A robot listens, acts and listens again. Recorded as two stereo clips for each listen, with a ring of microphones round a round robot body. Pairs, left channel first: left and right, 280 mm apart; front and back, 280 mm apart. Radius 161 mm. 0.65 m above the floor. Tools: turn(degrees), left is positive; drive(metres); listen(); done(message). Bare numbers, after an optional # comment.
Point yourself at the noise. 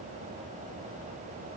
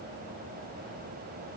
listen()
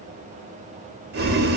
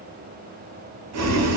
# The boiling: 145° right.
turn(-145)
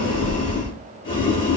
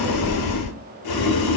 # The boiling is now 15° left.
turn(15)
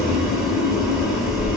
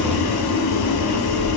done("Found it: boiling, straight ahead, under 1 m away.")